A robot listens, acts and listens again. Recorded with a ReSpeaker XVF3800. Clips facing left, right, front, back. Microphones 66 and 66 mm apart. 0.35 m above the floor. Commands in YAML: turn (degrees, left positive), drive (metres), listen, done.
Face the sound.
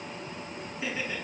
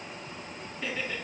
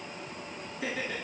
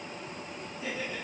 turn: 10
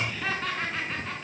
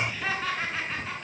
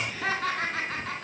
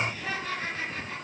done: "Facing the laughter, 2 to 4 m away."